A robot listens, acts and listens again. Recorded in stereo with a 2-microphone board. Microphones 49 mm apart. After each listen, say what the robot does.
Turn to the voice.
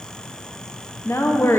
Turn 60° left.
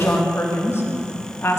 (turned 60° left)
Turn 55° left.
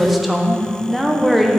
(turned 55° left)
Facing the woman speaking, under 1 m away.